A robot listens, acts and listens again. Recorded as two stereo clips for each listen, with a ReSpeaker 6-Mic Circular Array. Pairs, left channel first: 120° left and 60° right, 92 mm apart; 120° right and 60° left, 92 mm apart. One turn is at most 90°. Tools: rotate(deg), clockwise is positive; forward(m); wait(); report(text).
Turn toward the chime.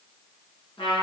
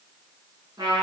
wait()
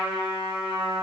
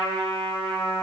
wait()
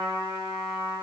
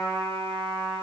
report("I can't make out a chime to turn to.")